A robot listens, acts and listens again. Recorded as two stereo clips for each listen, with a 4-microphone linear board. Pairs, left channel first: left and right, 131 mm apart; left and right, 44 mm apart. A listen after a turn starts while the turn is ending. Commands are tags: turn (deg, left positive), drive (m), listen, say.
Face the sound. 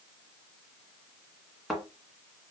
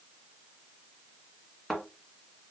<turn deg="30"/>
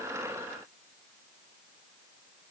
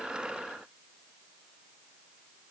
<listen/>
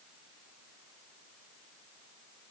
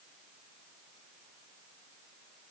<say>I heard a thud, but can't make it out now. It was about 30° right or 150° left.</say>